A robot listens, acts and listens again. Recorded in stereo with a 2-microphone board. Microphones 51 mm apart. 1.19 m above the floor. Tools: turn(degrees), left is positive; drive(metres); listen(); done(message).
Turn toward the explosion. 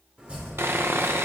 listen()
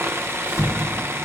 turn(degrees=70)
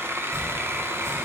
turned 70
listen()
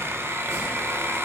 done("I heard an explosion, but can't make it out now. It was about straight ahead or 40° left.")